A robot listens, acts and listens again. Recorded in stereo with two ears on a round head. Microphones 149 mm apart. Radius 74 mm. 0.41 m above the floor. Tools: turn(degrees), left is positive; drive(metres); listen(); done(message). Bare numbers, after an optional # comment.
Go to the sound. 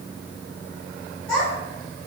turn(30)
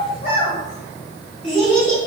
# So it is at 145° left.
turn(145)
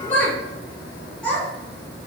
drive(1.0)
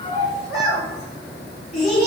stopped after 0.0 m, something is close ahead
done("Something is in my way. I am facing the child speaking but have not reached it.")